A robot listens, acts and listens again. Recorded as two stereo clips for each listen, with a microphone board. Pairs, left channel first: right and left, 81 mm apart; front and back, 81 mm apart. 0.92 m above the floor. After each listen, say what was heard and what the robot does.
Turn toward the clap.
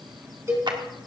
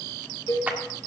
The clap: 110° left. Turn 110° left.
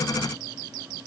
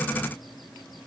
Keep listening.
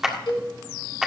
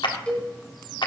Found it: a clap, straight ahead, 1 to 2 m away.